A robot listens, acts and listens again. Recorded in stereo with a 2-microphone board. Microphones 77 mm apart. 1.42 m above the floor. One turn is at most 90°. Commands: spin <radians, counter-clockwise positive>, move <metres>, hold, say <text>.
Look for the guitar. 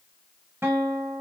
spin -0.52
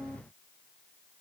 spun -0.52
say Facing the guitar, 1 to 2 m away.